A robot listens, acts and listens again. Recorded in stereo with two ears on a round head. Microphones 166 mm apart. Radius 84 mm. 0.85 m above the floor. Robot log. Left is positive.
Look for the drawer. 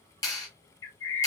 cmd idle
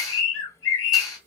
cmd idle
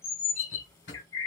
note: The drawer: about 75° left or 105° left.
cmd yaw +75
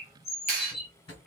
note: So it is at 30° left.
cmd yaw +30
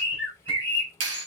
cmd idle
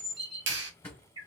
note: The drawer is now 10° left.
cmd yaw +10
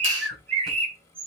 cmd idle
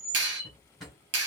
end: Found it: a drawer, straight ahead.